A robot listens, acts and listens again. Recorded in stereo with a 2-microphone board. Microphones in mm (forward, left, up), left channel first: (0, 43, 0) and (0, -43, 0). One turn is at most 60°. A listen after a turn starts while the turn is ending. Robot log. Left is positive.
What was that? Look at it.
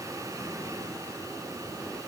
cmd idle
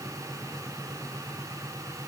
cmd idle
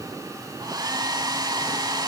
note: The hair dryer: about 50° right or 130° right.
cmd yaw -50
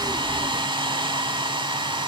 note: So it is at 75° right.
cmd yaw -60
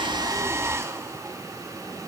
note: The hair dryer is now 35° right.
cmd yaw -35
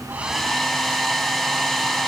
end: Facing the hair dryer, 1 to 2 m away.